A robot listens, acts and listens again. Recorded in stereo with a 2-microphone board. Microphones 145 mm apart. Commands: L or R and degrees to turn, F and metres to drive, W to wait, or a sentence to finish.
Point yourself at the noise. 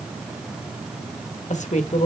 L55
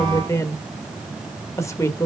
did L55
L25
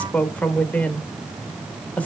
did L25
L10
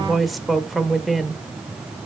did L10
Found it: a woman speaking, straight ahead, 1 to 2 m away.